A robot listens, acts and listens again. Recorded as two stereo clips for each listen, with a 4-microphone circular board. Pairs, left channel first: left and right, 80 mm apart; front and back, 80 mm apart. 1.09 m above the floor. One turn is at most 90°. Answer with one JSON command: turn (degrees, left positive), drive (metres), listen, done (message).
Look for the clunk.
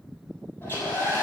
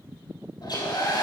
{"listen": true}
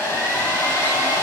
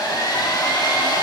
{"listen": true}
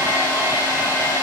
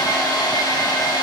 {"done": "I can't make out a clunk to turn to."}